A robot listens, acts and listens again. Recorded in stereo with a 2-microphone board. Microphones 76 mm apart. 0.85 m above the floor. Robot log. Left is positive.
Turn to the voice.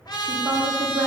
note: The woman speaking: about 65° right or 115° right.
cmd yaw -65
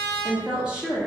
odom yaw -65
note: So it is at 10° right.
cmd yaw -10
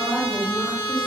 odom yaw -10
end: Found it: a woman speaking, straight ahead, 1 to 2 m away.